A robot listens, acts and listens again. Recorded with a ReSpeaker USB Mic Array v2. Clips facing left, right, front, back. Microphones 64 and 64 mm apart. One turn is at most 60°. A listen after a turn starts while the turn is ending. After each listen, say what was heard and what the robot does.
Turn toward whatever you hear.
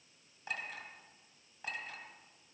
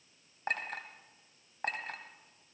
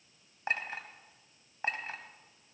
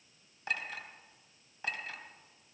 The clink: 60° right. Turn 60° right.
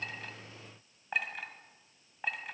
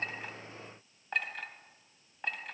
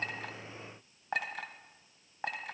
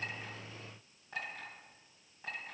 Facing the clink.